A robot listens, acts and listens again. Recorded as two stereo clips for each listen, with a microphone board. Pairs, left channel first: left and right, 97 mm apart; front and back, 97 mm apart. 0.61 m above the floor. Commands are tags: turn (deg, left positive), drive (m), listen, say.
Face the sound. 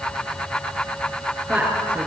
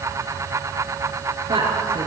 <turn deg="-170"/>
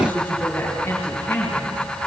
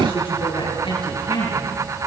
<turn deg="20"/>
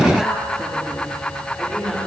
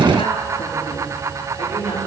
<say>Found it: a woman speaking, straight ahead.</say>